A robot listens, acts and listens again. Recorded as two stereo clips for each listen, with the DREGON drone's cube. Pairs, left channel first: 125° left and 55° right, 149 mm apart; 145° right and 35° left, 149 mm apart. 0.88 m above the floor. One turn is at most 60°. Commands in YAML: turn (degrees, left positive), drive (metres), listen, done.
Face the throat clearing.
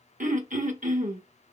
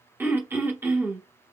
turn: -40
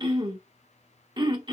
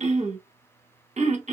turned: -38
done: "Facing the throat clearing."